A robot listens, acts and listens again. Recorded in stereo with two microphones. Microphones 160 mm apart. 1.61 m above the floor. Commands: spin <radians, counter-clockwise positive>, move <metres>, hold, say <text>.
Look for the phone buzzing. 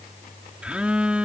spin -0.52
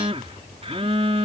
spin -2.53
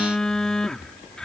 say Facing the phone buzzing.